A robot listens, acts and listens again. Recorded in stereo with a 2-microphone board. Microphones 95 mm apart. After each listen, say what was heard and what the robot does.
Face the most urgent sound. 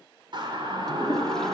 The siren: about 55° right or 125° right. Turn 55° right.
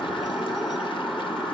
Facing the siren, 2 to 4 m away.